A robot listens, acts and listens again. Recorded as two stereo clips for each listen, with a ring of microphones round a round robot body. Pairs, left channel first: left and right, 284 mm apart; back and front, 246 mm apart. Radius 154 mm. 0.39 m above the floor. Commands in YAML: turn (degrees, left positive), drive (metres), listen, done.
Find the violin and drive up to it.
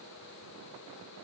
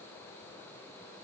listen: true
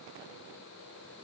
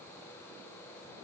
listen: true
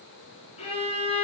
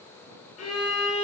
turn: 160
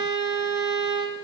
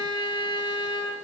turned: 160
drive: 1.0
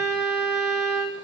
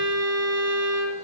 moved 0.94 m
drive: 1.0
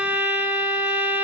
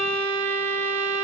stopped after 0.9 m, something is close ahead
done: "Arrived at the violin, straight ahead."